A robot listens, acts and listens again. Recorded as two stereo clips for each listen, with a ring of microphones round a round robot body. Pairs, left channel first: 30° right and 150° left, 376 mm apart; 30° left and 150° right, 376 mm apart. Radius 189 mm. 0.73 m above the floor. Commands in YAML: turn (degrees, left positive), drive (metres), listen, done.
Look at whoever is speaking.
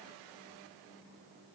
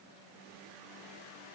listen: true
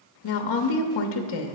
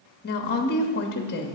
turn: -30
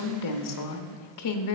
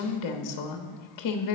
done: "Found it: a woman speaking, straight ahead, under 1 m away."